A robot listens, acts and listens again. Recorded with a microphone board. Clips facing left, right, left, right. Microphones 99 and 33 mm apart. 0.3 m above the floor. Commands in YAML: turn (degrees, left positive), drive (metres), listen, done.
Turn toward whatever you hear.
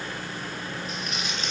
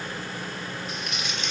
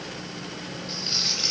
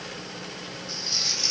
turn: 45
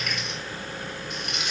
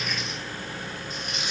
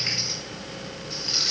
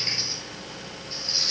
turn: 90
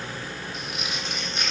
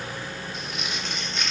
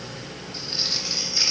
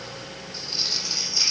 turn: 10
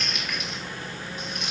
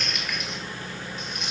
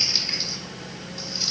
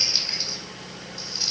done: "Found it: crumpling, straight ahead."